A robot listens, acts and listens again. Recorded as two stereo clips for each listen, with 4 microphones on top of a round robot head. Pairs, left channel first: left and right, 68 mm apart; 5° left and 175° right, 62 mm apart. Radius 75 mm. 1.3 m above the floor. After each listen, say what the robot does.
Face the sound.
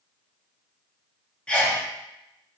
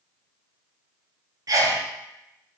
Turn 165° left.
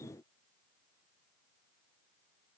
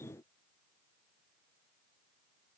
I heard a sneeze from this way, but can't make it out now.